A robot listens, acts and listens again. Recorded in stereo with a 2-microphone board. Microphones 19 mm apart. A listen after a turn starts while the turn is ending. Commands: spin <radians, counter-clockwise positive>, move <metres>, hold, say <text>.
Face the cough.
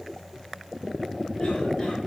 hold
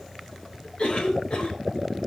spin 1.05
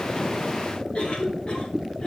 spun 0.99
spin 1.13
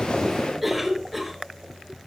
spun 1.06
say Facing the cough, over 4 m away.